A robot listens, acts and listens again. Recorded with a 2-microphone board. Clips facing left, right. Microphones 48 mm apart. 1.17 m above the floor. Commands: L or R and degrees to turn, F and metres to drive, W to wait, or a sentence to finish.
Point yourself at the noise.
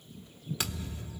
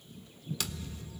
L25
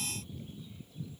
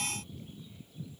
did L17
W
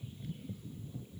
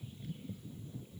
I heard a thud, but can't make it out now. It was about 10° left or 135° left.